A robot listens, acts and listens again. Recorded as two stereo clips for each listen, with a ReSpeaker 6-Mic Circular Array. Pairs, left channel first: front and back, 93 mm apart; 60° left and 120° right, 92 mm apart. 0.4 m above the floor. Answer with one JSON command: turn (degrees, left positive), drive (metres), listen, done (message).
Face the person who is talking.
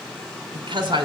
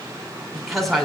{"turn": 150}
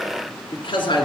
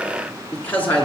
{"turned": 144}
{"turn": -15}
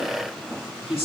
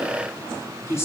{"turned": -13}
{"done": "Found it: a woman speaking, straight ahead."}